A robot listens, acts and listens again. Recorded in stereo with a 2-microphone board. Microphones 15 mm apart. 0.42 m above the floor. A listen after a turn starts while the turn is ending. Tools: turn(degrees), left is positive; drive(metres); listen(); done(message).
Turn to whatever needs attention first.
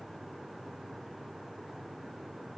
listen()
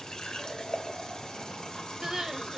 turn(degrees=-35)
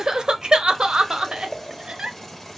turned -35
turn(degrees=-105)
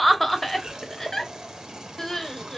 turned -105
turn(degrees=25)
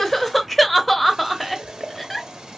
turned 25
done("Facing the crying.")